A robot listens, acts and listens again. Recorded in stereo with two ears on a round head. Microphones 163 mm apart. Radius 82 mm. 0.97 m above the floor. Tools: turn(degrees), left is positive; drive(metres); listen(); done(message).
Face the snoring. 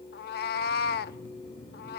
turn(degrees=90)
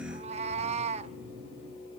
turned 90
done("Facing the snoring.")